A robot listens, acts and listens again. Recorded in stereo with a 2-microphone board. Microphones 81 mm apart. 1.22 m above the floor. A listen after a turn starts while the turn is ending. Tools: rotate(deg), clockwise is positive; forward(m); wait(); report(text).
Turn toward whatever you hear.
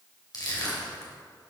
rotate(-55)
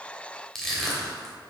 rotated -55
report("Facing the crushing, 2 to 4 m away.")